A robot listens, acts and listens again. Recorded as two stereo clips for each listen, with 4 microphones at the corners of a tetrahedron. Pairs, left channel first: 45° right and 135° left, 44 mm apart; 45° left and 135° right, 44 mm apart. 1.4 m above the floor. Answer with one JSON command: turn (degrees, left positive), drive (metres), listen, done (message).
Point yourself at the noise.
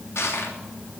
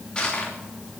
{"turn": -25}
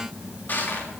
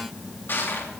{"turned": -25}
{"done": "Found it: crushing, straight ahead, 2 to 4 m away."}